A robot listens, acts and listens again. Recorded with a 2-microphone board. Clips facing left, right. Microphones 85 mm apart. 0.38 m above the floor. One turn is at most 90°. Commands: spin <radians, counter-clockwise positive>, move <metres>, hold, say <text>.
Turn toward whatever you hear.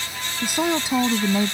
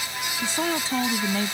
spin 0.35
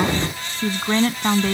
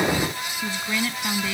spin 1.57
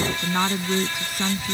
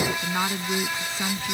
spin 0.17
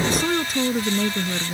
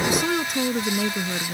say Found it: a woman speaking, straight ahead.